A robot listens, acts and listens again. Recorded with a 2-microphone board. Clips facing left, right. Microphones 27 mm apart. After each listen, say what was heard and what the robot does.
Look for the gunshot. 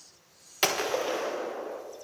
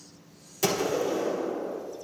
The gunshot: about 45° left or 135° left. Turn 45° left.
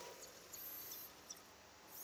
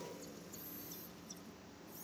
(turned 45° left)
Keep listening.
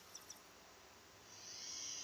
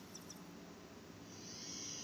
I heard a gunshot, but can't make it out now. It was about straight ahead or 90° left.